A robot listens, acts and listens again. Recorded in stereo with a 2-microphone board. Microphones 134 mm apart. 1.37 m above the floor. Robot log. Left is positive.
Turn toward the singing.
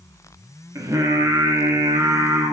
note: The singing: about 20° right or 160° right.
cmd yaw -20
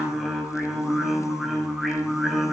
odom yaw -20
end: Found it: singing, straight ahead, 2 to 4 m away.